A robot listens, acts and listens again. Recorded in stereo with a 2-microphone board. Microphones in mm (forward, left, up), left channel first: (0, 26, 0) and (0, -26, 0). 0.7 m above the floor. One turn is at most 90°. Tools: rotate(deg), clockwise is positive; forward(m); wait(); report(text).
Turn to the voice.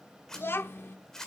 rotate(-45)
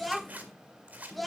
report("Facing the child speaking, under 1 m away.")